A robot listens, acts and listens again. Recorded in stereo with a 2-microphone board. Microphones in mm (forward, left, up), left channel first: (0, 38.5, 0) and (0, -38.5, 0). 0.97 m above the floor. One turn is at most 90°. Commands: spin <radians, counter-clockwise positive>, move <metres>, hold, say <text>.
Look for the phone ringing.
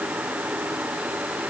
hold
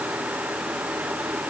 hold
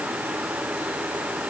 say I can't make out a phone ringing.